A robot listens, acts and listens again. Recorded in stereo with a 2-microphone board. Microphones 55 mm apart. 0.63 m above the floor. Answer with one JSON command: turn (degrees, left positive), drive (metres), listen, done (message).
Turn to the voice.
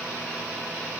{"listen": true}
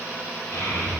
{"turn": 70}
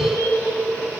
{"turn": 25}
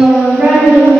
{"done": "Found it: a child speaking, straight ahead."}